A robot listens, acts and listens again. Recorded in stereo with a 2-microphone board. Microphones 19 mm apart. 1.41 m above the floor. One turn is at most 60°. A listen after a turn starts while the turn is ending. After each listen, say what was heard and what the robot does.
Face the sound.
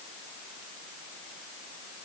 Keep listening.
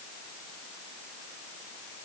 Keep listening.
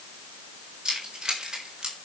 The keys jangling: about 40° right or 140° right. Turn 40° right.
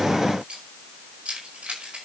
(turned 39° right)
So it is at 95° right. Turn 60° right.
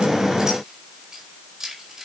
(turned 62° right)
The keys jangling is now 30° right. Turn 30° right.
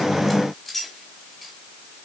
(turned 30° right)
Facing the keys jangling, over 4 m away.